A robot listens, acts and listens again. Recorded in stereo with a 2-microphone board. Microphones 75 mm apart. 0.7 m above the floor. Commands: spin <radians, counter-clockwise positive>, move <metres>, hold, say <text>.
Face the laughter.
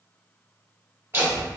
spin -0.44
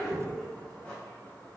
spin 0.17
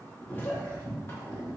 spin 0.70
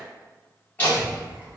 spin 0.44
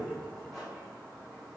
hold
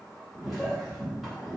say Found it: laughter, straight ahead, 1 to 2 m away.